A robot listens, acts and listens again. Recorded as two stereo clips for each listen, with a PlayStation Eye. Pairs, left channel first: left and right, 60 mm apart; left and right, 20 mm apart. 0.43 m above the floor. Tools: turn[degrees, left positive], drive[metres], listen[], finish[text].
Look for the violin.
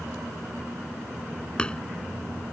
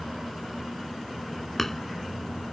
Action: listen[]
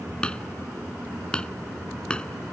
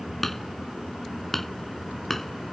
Action: listen[]
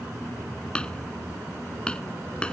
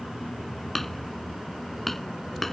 Action: finish[I can't make out a violin, only hammering.]